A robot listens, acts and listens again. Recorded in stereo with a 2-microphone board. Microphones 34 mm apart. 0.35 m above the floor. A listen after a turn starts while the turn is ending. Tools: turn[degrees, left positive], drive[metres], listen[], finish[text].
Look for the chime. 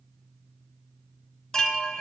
Thought: The chime: about 20° left or 160° left.
Action: turn[20]
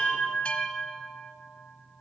Thought: So it is at 140° left.
Action: turn[140]
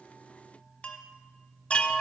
Thought: The chime is now 35° left.
Action: turn[35]
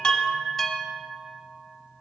Thought: The chime is now 10° left.
Action: turn[10]
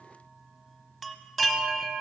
Action: finish[Found it: a chime, straight ahead, 1 to 2 m away.]